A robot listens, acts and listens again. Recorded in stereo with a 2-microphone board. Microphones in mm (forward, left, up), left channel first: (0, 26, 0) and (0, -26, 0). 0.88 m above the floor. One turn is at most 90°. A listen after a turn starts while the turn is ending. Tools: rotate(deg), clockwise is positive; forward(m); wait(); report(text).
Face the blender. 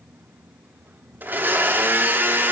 rotate(40)
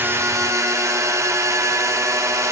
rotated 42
rotate(90)
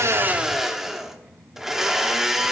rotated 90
report("Facing the blender, under 1 m away.")